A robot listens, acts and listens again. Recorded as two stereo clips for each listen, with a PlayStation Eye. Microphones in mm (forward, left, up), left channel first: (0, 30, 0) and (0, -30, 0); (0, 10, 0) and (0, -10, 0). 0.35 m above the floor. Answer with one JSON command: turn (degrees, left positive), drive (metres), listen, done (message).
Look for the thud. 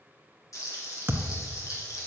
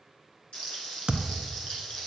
{"turn": -45}
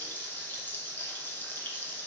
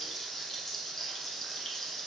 {"listen": true}
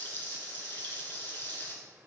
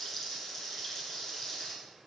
{"done": "I heard a thud, but can't make it out now. It was about straight ahead or 90° right."}